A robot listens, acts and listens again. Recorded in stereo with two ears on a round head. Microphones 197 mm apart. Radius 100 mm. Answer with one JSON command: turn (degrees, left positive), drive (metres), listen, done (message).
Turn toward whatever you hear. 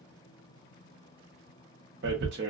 {"turn": -50}
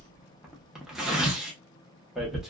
{"done": "Facing the tearing paper."}